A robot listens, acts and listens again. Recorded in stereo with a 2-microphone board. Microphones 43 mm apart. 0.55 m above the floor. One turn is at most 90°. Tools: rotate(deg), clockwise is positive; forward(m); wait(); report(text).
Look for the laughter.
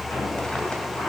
wait()
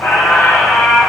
wait()
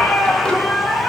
report("I can't make out laughter, only a squeak.")